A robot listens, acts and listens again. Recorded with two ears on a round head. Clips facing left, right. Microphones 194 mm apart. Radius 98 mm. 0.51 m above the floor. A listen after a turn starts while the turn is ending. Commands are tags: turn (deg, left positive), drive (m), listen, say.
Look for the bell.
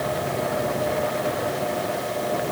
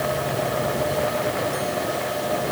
<listen/>
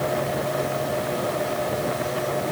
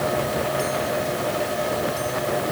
<listen/>
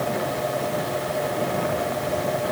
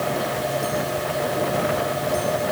<say>I can't make out a bell to turn to.</say>